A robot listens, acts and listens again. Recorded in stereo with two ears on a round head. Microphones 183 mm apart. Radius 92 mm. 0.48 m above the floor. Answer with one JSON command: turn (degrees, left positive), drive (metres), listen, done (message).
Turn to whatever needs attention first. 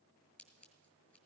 {"listen": true}
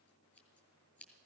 {"listen": true}
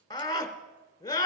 {"turn": 20}
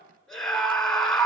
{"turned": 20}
{"done": "Found it: a scream, straight ahead."}